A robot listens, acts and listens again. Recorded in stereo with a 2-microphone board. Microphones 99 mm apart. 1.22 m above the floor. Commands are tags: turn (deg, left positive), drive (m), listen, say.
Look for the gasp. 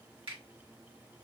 <listen/>
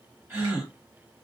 <turn deg="-25"/>
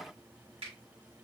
<listen/>
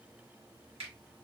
<say>I heard a gasp, but can't make it out now. It was about straight ahead or 130° right.</say>